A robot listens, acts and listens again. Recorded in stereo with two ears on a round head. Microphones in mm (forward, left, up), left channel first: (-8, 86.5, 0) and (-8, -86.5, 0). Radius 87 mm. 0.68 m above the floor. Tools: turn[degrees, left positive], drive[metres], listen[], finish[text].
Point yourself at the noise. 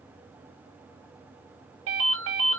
Thought: The ringtone: about 70° right or 110° right.
Action: turn[-70]
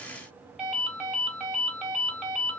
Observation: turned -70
Action: finish[Facing the ringtone, 2 to 4 m away.]